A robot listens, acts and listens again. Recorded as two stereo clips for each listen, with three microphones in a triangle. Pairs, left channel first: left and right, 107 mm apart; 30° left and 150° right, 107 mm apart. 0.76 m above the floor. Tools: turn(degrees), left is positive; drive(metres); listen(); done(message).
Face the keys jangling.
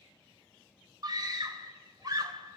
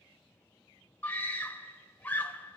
listen()
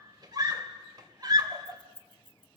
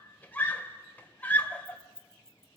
turn(degrees=-55)
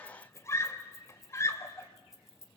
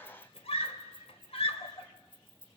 done("Found it: keys jangling, straight ahead.")